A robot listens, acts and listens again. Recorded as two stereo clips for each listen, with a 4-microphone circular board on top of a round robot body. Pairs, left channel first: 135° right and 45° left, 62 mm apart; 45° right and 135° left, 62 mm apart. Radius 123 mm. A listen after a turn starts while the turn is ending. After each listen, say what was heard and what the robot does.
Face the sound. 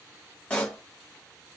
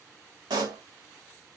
The pop: 150° left. Turn 150° left.
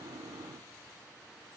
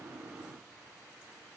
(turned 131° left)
Nothing new. It was at 20° left. Turn 20° left.
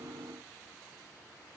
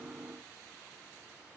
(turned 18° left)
Facing where the pop came from. I can't hear it now.